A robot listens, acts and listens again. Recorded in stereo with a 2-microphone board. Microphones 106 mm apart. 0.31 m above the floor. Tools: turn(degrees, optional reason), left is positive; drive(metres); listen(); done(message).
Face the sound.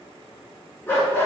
turn(degrees=20, reason="The dog barking: about 20° left or 160° left.")
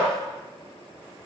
done("Found it: a dog barking, straight ahead.")